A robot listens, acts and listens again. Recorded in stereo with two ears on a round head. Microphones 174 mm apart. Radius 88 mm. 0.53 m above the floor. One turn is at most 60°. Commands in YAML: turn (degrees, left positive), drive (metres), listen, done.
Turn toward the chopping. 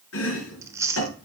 turn: 60
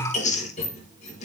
turn: 35
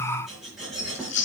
done: "Facing the chopping."